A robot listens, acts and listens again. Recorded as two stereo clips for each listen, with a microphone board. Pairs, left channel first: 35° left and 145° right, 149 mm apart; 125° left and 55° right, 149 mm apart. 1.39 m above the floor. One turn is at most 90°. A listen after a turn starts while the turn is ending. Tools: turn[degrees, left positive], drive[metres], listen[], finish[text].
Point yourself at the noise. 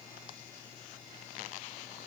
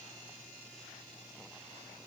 Action: listen[]
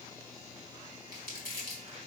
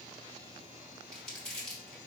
Thought: The crumpling: 150° right.
Action: turn[-90]
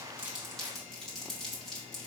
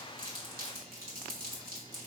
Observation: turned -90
Thought: The crumpling is now 55° right.
Action: turn[-55]
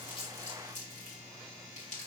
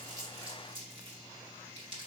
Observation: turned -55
Action: finish[Facing the crumpling, 1 to 2 m away.]